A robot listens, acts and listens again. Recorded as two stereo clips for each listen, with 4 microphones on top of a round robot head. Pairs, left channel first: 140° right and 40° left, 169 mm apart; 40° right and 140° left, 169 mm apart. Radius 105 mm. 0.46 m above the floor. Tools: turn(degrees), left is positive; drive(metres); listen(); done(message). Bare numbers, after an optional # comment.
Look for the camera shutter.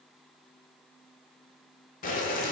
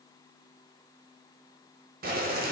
listen()
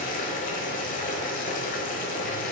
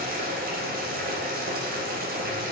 listen()
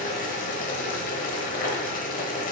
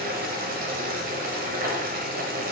done("I can't make out a camera shutter, only boiling.")